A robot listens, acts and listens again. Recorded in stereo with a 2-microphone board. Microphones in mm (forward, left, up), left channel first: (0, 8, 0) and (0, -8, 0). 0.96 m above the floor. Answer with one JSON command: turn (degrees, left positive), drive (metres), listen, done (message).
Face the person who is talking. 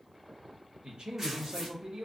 {"turn": -75}
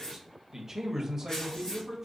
{"turn": -25}
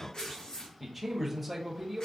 {"done": "Facing the man speaking."}